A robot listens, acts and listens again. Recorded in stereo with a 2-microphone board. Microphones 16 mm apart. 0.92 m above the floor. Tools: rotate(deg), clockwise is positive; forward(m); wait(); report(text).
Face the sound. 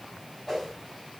rotate(-15)
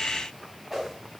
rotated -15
report("Facing the whoosh.")